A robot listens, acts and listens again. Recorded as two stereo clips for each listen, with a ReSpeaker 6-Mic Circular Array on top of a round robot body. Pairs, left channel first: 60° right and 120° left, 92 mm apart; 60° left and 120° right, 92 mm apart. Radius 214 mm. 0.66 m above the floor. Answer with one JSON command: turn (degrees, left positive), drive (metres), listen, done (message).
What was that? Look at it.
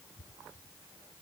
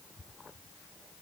{"listen": true}
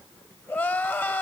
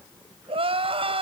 {"turn": -130}
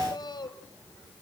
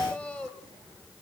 {"turn": -10}
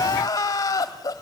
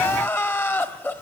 {"done": "Facing the crying."}